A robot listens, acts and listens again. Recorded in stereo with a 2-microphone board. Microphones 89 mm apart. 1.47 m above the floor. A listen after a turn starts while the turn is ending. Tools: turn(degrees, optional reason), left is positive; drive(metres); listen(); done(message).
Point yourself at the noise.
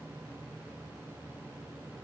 listen()
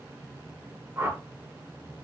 turn(degrees=-30, reason="The whoosh: about 30° right or 150° right.")
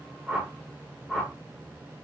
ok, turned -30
done("Facing the whoosh, under 1 m away.")